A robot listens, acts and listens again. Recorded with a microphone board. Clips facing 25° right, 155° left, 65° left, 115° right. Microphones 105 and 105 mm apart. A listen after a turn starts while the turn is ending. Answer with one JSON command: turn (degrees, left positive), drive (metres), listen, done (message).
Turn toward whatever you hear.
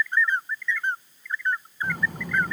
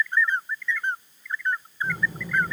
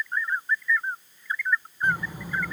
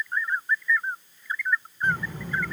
{"turn": -10}
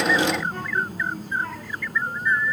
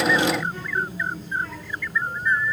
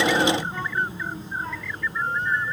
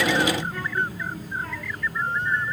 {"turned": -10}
{"done": "Found it: a child speaking, straight ahead, 2 to 4 m away."}